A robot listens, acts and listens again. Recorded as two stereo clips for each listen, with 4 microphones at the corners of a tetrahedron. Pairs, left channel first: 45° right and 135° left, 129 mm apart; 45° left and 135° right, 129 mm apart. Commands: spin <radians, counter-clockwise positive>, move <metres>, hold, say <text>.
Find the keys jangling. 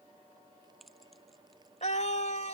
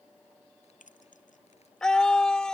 spin 0.79
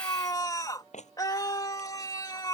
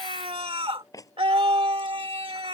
spin -0.35
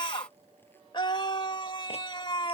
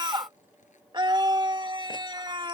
hold
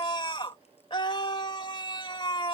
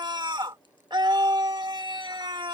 hold
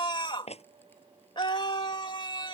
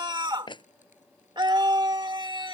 say Found it: keys jangling, straight ahead.